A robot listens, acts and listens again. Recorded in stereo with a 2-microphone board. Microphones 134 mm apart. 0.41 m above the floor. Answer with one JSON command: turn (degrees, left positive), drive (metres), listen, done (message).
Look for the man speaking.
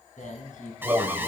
{"turn": 75}
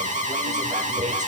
{"listen": true}
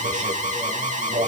{"listen": true}
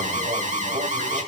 {"done": "I heard a man speaking, but can't make it out now. It was about straight ahead or 30° left."}